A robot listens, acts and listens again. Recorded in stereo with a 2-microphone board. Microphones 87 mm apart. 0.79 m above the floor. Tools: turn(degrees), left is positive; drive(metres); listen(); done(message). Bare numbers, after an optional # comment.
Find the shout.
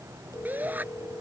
# The shout: about 20° right or 160° right.
turn(-20)
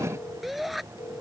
done("Found it: a shout, straight ahead.")